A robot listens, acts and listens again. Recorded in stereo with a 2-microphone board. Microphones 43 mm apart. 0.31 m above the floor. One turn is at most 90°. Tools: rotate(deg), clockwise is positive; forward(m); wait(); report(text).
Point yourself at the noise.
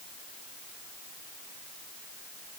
wait()
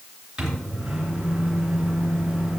rotate(15)
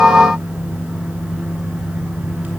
rotate(90)
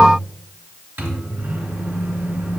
rotate(60)
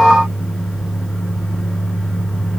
report("Facing the microwave, 2 to 4 m away.")